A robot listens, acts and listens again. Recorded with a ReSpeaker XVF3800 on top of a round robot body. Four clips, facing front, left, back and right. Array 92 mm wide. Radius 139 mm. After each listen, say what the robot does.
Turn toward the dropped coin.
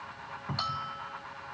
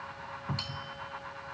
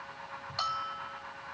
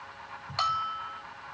Keep listening.
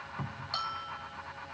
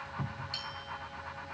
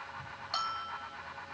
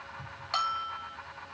Keep listening.
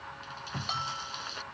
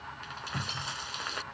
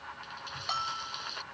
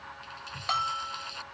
Turn 85° left.
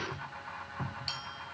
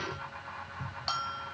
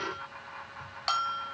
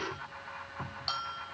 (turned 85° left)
I heard a dropped coin from this way, but can't make it out now.